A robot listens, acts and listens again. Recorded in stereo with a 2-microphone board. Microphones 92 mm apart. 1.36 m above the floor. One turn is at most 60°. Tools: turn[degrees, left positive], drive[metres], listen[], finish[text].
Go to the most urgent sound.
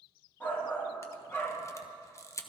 Thought: The shout: about 20° left or 160° left.
Action: turn[20]
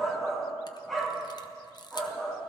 Action: drive[1.0]
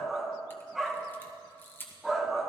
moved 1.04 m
Action: drive[1.0]
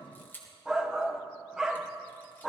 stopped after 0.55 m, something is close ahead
Thought: The shout is now 10° right.
Action: turn[-10]
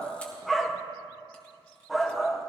Action: finish[I am next to the shout.]